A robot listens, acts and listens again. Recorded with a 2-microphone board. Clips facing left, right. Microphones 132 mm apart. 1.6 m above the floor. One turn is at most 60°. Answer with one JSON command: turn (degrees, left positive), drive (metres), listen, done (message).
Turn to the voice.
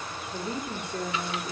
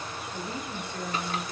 {"turn": 50}
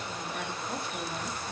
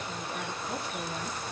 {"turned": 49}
{"listen": true}
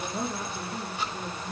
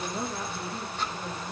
{"turn": 15}
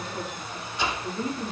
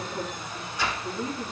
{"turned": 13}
{"turn": 10}
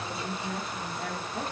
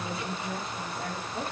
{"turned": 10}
{"done": "Found it: a woman speaking, straight ahead, over 4 m away."}